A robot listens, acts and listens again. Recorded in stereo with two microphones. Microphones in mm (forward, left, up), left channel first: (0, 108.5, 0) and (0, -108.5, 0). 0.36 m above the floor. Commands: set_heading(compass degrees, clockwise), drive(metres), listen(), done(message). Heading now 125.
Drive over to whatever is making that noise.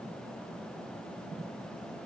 listen()
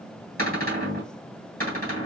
set_heading(170)
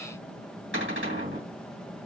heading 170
set_heading(255)
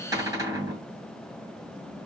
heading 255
set_heading(275)
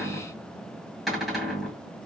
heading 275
drive(1.0)
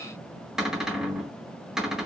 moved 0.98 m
drive(1.0)
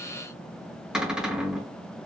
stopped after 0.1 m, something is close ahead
done("I am next to the cupboard door.")